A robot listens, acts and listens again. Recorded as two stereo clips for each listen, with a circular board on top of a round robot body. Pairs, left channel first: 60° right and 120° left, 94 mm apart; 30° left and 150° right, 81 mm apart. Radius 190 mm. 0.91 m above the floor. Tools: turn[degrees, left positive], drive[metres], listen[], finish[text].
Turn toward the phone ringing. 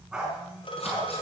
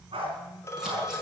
Thought: The phone ringing: 30° right.
Action: turn[-30]
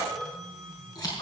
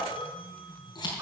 Thought: The phone ringing is now 30° left.
Action: turn[30]
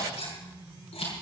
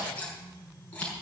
Action: listen[]
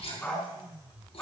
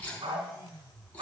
Action: listen[]
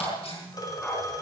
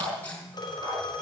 Thought: The phone ringing is now 10° right.
Action: turn[-10]
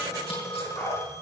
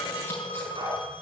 Action: finish[Found it: a phone ringing, straight ahead, 2 to 4 m away.]